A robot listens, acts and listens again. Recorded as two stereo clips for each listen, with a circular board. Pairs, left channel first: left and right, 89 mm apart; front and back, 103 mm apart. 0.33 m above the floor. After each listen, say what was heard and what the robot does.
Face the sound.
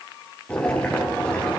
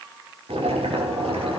The boiling: 170° left. Turn 170° left.
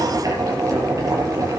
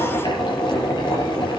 The boiling is now 40° right. Turn 40° right.
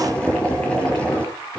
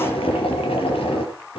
The boiling is now 15° left. Turn 15° left.
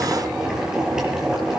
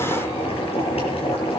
Found it: boiling, straight ahead.